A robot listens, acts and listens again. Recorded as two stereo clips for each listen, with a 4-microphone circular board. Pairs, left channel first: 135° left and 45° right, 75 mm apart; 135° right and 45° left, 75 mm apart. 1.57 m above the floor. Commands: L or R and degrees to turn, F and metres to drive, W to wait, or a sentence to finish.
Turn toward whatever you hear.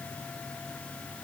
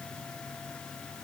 W
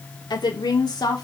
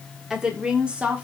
L115
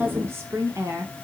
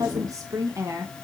Found it: a woman speaking, straight ahead, 1 to 2 m away.